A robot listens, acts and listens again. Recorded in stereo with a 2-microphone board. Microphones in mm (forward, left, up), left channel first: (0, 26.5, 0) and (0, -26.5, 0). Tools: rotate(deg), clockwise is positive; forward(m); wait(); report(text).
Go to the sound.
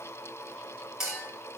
rotate(30)
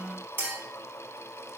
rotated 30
rotate(140)
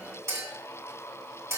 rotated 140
rotate(60)
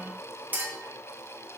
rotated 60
rotate(35)
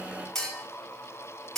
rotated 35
rotate(-10)
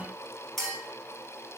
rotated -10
forward(1.0)
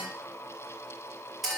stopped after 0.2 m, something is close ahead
report("Something is in my way. I am facing the clink but have not reached it.")